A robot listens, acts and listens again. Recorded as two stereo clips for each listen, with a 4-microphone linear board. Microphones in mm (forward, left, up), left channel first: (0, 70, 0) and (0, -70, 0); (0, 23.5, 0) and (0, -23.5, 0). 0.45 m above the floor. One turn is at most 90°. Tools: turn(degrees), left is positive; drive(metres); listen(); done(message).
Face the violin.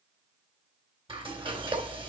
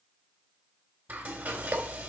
listen()
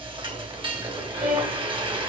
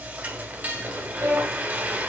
turn(degrees=-90)
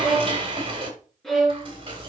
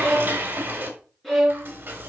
done("Found it: a violin, straight ahead.")